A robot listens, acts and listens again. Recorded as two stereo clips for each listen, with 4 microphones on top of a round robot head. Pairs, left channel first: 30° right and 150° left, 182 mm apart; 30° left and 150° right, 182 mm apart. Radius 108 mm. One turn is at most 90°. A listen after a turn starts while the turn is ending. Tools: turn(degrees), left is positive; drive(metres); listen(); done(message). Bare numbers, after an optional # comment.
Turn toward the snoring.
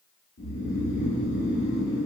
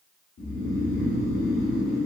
# The snoring: 15° left.
turn(15)
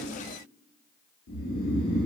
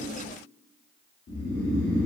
done("Found it: snoring, straight ahead.")